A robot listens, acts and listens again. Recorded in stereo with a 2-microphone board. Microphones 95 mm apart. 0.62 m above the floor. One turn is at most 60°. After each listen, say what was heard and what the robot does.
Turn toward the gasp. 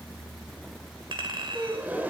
The gasp: about 20° right or 160° right. Turn 20° right.
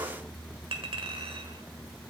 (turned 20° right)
Keep listening.
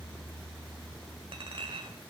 I heard a gasp, but can't make it out now. It was about straight ahead or 140° right.